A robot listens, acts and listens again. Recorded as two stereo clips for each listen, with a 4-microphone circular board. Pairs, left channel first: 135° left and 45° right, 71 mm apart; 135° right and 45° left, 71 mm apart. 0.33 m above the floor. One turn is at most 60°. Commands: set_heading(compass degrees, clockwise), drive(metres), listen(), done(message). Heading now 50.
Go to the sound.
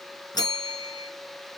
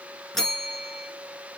set_heading(350)
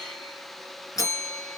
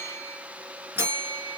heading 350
set_heading(290)
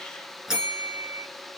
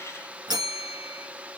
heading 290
set_heading(255)
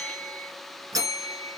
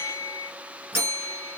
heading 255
set_heading(265)
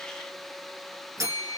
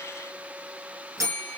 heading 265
drive(1.0)
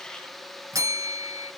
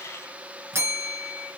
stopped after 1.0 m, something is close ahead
set_heading(275)
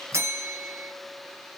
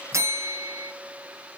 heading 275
done("I am next to the bell.")